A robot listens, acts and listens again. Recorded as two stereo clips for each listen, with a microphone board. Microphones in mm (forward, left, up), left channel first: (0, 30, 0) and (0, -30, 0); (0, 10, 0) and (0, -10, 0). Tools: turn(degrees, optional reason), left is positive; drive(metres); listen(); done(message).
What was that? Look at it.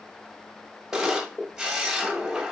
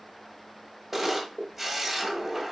turn(degrees=-30)
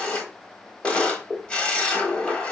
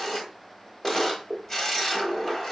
turn(degrees=20, reason="So it is at 20° left.")
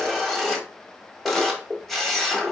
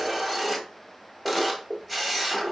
done("Found it: a camera shutter, straight ahead, 1 to 2 m away.")